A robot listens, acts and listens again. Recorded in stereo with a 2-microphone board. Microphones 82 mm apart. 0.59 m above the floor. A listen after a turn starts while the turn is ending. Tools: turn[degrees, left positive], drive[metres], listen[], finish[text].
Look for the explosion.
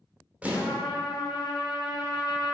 Thought: The explosion: about 15° right or 165° right.
Action: turn[-15]
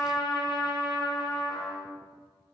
Action: listen[]
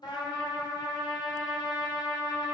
Action: finish[I heard an explosion, but can't make it out now. It was about straight ahead or 150° right.]